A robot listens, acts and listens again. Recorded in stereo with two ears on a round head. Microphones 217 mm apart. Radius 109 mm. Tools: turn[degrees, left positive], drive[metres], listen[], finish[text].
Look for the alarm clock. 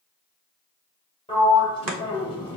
Action: listen[]
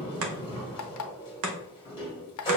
Thought: The alarm clock: about 70° left or 110° left.
Action: turn[70]
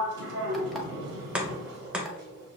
Action: listen[]
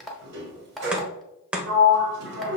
Action: finish[Facing the alarm clock, under 1 m away.]